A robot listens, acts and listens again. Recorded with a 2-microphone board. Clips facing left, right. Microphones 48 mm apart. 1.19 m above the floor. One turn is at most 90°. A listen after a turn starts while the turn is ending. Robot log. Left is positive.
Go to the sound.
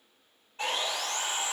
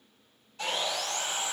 note: The sawing: about 35° left or 145° left.
cmd yaw +35
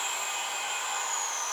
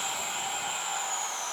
note: So it is at 110° left.
cmd yaw +90
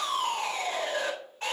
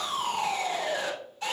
note: The sawing is now 40° left.
cmd yaw +40
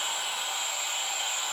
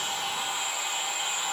note: The sawing is now 10° right.
cmd yaw -10
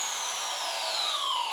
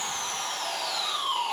cmd fwd 1.0
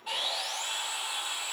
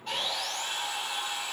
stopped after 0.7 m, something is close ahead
end: Blocked. The sawing is further on, straight ahead.